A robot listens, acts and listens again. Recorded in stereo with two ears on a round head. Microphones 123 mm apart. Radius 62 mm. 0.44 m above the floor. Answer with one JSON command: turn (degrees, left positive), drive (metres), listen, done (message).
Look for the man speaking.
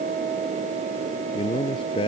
{"turn": 35}
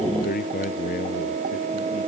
{"turn": 115}
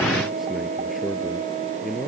{"done": "Found it: a man speaking, straight ahead."}